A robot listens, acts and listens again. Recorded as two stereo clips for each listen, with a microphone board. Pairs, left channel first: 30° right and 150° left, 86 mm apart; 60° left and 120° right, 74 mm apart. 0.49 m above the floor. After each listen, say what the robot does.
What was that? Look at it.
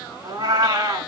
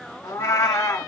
Turn 105° left.
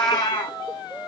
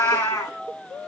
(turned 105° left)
Turn 10° left.
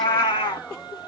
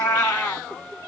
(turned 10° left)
Found it: a cat meowing, straight ahead.